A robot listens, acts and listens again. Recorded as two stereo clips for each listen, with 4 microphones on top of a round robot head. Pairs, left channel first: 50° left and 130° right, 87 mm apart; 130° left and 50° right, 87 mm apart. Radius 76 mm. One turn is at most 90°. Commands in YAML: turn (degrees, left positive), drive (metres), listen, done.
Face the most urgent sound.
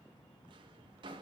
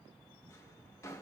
listen: true
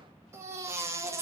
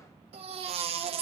turn: -70
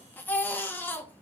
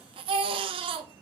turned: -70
turn: -20
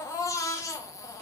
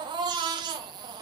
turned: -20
turn: -10
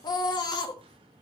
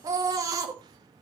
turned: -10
done: "Facing the baby crying, 1 to 2 m away."